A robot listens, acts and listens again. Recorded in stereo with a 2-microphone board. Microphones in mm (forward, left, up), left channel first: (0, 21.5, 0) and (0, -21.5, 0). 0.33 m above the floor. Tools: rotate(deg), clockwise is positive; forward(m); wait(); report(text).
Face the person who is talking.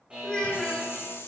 rotate(-15)
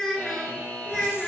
rotate(-30)
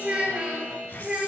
rotate(25)
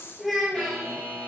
report("Found it: a child speaking, straight ahead.")